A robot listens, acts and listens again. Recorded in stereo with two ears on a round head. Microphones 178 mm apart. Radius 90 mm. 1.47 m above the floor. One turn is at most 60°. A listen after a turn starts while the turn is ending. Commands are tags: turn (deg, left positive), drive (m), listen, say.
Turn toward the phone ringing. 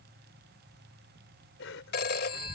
<turn deg="55"/>
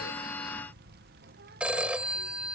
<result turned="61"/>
<say>Facing the phone ringing.</say>